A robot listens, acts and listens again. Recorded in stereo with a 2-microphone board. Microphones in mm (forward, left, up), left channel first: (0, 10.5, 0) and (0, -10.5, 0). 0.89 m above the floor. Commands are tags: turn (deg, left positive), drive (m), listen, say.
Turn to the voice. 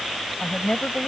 <turn deg="50"/>
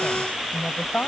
<turn deg="80"/>
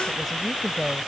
<say>Facing the woman speaking.</say>